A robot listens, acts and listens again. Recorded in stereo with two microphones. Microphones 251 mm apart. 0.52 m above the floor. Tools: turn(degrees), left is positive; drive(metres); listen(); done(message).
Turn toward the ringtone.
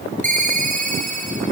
turn(degrees=-30)
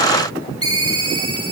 turn(degrees=-120)
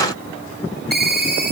turn(degrees=-35)
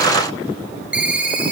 done("Facing the ringtone, 2 to 4 m away.")